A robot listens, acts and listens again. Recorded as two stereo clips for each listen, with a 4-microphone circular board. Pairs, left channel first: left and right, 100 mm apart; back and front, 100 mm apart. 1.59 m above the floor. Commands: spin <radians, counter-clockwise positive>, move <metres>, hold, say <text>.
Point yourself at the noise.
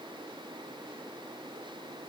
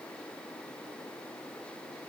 hold
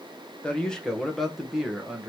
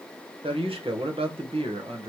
spin -0.17
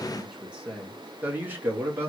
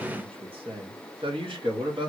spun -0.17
spin -0.44
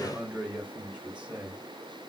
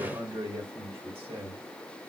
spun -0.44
spin -0.17
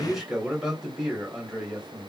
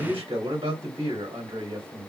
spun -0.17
say Facing the man speaking, 1 to 2 m away.